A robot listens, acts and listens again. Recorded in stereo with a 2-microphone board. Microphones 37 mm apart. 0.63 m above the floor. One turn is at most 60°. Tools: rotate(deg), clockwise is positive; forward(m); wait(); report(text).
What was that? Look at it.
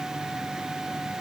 wait()
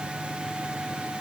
wait()
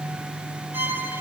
rotate(60)
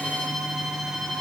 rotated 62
report("Facing the violin.")